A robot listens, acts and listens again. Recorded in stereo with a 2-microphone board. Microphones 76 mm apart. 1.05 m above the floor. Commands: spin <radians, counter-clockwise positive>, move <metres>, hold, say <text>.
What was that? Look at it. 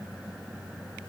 hold
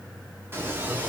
spin -0.44
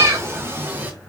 spin -0.44
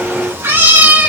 spin -0.35
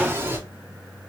spin -0.52
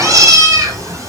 spin -2.36
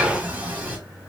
spin -0.44
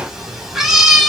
say Facing the cat meowing, 1 to 2 m away.